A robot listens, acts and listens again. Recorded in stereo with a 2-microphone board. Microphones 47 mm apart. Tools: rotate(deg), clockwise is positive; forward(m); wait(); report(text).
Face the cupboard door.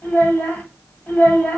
wait()
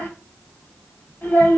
wait()
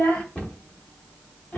rotate(-30)
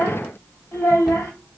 wait()
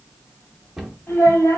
report("Found it: a cupboard door, straight ahead.")